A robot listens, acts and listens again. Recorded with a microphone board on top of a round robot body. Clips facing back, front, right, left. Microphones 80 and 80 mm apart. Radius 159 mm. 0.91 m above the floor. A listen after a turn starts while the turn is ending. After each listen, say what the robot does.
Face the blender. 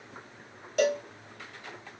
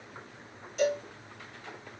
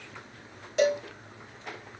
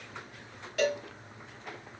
Keep listening.
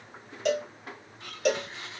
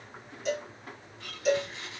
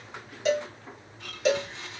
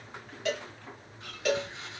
Turn 110° right.
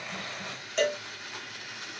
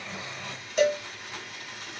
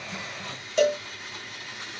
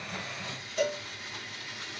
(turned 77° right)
Turn 30° right.
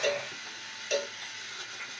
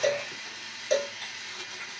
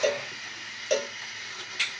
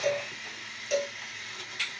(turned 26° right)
Found it: a blender, straight ahead, 2 to 4 m away.